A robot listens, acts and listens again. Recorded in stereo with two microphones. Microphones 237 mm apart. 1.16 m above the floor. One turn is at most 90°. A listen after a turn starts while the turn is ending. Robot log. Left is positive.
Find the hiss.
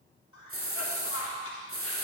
note: The hiss: about 65° right or 115° right.
cmd yaw -65
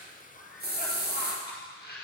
note: So it is at 45° right.
cmd yaw -45
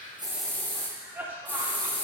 end: Facing the hiss, 1 to 2 m away.